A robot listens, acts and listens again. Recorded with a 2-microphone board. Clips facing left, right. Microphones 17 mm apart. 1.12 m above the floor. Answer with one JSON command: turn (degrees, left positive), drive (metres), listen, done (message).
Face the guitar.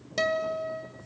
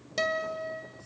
{"turn": 30}
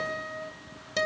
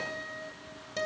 {"turn": 145}
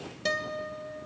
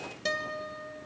{"done": "Facing the guitar."}